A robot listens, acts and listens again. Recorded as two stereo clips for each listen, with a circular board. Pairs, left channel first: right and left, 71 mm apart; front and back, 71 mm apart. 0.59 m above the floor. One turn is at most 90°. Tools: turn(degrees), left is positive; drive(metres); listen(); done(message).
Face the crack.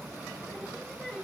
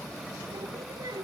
listen()
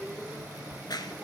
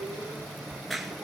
turn(degrees=-90)
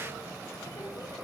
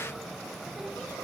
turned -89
done("I heard a crack from this way, but can't make it out now.")